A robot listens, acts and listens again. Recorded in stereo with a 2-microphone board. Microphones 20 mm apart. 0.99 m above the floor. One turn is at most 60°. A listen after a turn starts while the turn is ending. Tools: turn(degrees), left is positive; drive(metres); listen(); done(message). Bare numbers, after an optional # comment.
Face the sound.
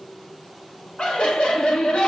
# The laughter: about 55° left or 125° left.
turn(55)
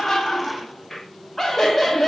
# So it is at 10° left.
turn(10)
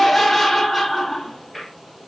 done("Found it: laughter, straight ahead.")